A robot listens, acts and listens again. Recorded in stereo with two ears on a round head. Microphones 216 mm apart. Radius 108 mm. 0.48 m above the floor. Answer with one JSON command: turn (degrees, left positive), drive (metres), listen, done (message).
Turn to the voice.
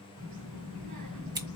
{"turn": -75}
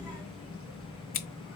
{"done": "Facing the child speaking, 2 to 4 m away."}